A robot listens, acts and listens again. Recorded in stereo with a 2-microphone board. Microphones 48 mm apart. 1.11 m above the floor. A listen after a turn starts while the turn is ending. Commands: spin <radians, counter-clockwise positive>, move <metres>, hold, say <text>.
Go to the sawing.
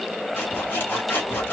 spin 0.87
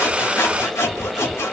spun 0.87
spin 1.31
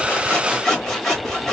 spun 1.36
move 1.0
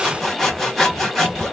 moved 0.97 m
move 1.0
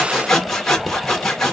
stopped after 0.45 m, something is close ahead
say I am next to the sawing.